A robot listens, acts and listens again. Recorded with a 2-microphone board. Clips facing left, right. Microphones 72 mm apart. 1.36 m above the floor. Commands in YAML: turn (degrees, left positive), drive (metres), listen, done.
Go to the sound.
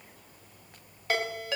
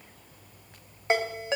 turn: -25
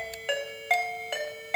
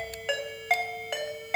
drive: 1.0
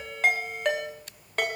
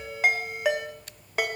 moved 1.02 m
turn: -10
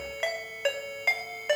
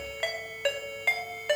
drive: 1.0
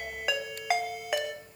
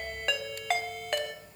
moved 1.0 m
turn: 10
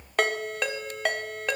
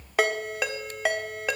drive: 1.0
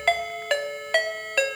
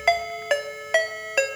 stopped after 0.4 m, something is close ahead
turn: -10
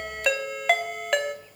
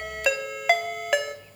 done: "Arrived at the ringtone, straight ahead."